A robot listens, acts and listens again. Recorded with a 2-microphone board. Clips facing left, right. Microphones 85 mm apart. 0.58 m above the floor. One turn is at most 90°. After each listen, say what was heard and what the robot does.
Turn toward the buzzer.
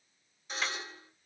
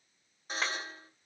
The buzzer: about 45° right or 135° right. Turn 45° right.
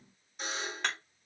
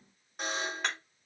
So it is at 85° right. Turn 85° right.
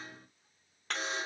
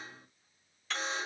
Facing the buzzer.